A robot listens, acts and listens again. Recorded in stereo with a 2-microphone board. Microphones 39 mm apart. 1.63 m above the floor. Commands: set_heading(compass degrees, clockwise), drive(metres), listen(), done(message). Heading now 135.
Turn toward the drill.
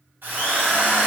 set_heading(195)
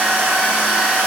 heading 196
set_heading(246)
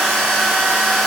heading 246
done("Facing the drill, 2 to 4 m away.")